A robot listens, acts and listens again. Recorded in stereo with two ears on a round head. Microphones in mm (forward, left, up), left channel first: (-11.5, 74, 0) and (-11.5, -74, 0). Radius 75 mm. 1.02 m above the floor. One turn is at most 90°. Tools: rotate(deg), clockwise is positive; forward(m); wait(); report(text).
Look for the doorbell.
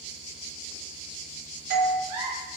rotate(60)
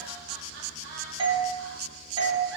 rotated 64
rotate(35)
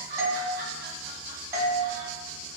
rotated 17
rotate(20)
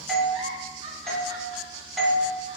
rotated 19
report("Found it: a doorbell, straight ahead, 1 to 2 m away.")